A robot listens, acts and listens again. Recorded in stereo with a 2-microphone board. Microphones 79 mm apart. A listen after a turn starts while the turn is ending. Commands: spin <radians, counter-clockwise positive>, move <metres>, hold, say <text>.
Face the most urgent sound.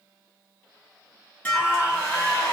spin -0.35
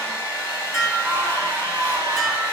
spin -2.44
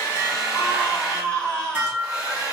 spin 0.35
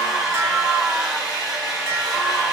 say Found it: a scream, straight ahead.